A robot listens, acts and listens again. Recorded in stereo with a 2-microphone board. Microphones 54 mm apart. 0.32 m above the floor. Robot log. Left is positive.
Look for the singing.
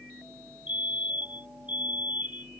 cmd idle
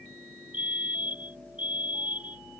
cmd idle
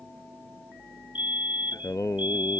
cmd yaw +90
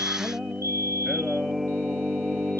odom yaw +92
end: Found it: singing, straight ahead.